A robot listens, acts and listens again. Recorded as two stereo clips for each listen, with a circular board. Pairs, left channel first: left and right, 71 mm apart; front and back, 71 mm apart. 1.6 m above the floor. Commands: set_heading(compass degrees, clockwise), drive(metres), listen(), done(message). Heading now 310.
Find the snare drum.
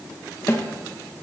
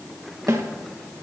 set_heading(170)
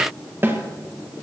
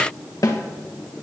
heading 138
set_heading(173)
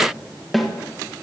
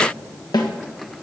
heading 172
done("Facing the snare drum.")